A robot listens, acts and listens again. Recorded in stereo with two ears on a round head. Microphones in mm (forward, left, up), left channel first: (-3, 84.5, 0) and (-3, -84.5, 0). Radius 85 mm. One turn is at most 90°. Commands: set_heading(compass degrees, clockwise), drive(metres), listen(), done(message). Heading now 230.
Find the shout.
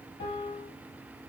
listen()
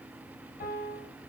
listen()
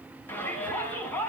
set_heading(200)
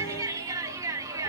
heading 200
set_heading(220)
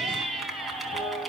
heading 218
done("Found it: a shout, straight ahead.")